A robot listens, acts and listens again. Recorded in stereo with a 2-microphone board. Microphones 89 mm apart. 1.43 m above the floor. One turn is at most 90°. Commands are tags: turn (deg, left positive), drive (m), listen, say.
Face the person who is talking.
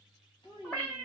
<turn deg="65"/>
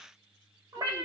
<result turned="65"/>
<listen/>
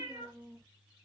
<turn deg="10"/>
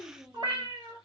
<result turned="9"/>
<say>Facing the child speaking.</say>